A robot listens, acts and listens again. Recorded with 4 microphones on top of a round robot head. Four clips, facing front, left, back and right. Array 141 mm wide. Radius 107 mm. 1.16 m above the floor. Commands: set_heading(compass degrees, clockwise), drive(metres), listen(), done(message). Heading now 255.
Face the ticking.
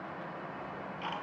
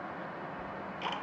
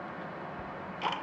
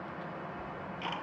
set_heading(80)
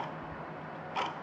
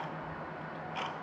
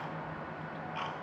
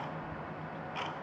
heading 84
done("Found it: ticking, straight ahead.")